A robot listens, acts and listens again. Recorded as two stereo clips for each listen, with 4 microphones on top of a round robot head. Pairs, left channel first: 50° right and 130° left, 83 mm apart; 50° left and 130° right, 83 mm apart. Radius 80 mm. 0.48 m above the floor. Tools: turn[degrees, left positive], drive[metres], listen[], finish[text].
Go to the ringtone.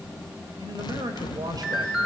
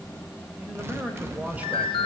Thought: The ringtone: 50° left.
Action: turn[50]
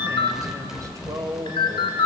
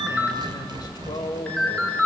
Thought: The ringtone is now 25° right.
Action: turn[-25]
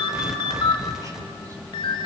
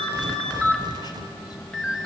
Thought: The ringtone is now 30° right.
Action: turn[-30]
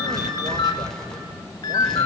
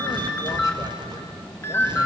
Thought: The ringtone is now 10° right.
Action: turn[-10]
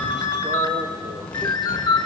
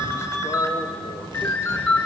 Action: drive[1.0]
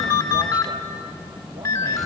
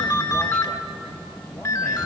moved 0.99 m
Action: drive[1.0]
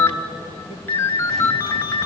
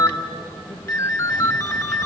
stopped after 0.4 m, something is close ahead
Action: finish[I am next to the ringtone.]